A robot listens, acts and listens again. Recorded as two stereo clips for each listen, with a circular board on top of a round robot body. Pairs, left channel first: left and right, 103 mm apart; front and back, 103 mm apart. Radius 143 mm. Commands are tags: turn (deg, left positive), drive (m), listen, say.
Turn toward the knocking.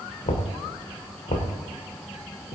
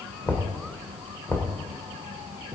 <turn deg="70"/>
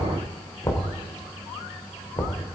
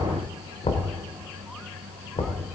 <turn deg="30"/>
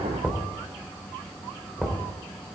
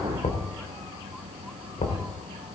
<say>Facing the knocking.</say>